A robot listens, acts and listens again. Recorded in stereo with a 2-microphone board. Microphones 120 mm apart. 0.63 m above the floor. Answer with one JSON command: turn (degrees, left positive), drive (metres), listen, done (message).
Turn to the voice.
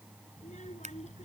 {"turn": 90}
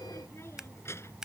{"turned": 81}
{"turn": 20}
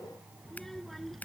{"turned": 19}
{"done": "Found it: a child speaking, straight ahead."}